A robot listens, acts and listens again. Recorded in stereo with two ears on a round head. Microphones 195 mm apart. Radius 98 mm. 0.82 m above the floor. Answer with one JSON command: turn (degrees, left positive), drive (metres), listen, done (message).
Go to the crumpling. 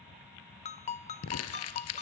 {"turn": 90}
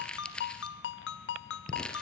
{"drive": 1.0}
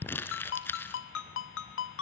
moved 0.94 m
{"turn": 10}
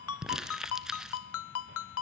{"drive": 1.0}
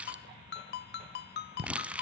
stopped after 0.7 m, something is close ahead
{"done": "I am next to the crumpling."}